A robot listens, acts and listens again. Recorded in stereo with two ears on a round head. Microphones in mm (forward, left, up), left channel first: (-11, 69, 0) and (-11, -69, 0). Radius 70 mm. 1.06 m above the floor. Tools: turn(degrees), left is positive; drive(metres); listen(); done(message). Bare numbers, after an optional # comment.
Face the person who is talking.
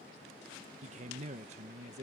# The man speaking: about 45° right or 135° right.
turn(-45)
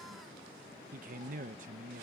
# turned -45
# So it is at 75° right.
turn(-75)
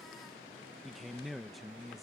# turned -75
done("Facing the man speaking.")